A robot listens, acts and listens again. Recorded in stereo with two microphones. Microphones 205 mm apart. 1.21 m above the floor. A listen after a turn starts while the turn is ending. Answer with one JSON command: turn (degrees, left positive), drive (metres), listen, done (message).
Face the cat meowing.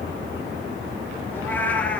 {"turn": 30}
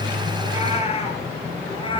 {"turn": 155}
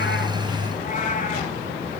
{"turn": 40}
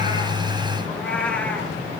{"done": "Found it: a cat meowing, straight ahead, 2 to 4 m away."}